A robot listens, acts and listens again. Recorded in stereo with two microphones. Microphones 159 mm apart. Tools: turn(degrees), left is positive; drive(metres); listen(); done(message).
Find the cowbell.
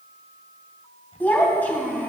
listen()
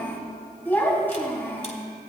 listen()
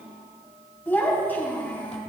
done("I can't make out a cowbell to turn to.")